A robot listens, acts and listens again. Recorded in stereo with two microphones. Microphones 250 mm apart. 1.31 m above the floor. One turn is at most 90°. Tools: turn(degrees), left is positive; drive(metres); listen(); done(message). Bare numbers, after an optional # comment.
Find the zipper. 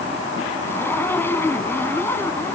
turn(30)
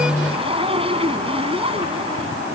# So it is at 20° right.
turn(-20)
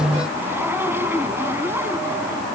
# The zipper is now 10° right.
turn(-10)
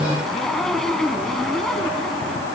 done("Facing the zipper.")